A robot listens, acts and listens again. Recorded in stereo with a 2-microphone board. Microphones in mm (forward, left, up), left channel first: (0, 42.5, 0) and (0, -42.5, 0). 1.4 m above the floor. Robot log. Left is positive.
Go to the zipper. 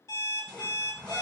cmd yaw +30
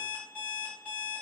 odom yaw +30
cmd idle
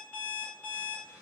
cmd idle
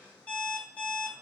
note: So it is at 20° right.
cmd yaw -20
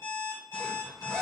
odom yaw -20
cmd fwd 1.0
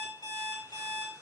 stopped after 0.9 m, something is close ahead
cmd idle
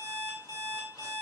cmd idle
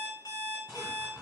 end: Arrived at the zipper, straight ahead.